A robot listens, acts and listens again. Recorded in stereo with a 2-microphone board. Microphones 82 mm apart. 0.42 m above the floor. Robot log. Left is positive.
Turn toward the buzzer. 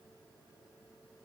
cmd idle
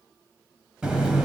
cmd yaw -30
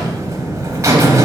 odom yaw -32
note: So it is at 135° right.
cmd yaw -135
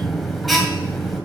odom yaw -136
end: Found it: a buzzer, straight ahead.